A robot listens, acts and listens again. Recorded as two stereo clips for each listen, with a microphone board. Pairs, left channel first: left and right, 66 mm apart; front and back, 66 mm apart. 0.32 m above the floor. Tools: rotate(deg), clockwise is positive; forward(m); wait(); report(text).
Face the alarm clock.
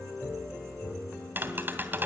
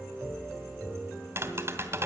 wait()
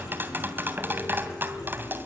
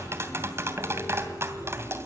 wait()
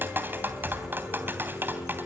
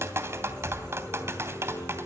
report("I can't make out an alarm clock to turn to.")